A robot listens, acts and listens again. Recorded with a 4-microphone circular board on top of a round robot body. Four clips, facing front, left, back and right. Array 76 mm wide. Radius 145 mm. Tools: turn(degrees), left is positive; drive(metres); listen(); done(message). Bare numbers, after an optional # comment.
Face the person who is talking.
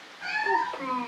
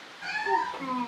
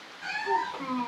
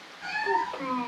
# The child speaking: 30° right.
turn(-30)
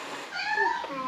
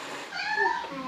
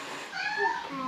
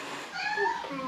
done("Found it: a child speaking, straight ahead, 1 to 2 m away.")